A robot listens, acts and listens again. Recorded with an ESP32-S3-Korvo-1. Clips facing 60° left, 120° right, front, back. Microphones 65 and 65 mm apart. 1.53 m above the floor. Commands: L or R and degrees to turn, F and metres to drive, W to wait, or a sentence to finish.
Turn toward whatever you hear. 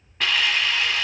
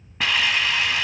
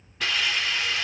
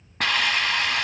L160
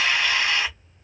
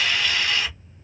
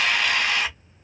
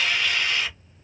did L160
Facing the hiss.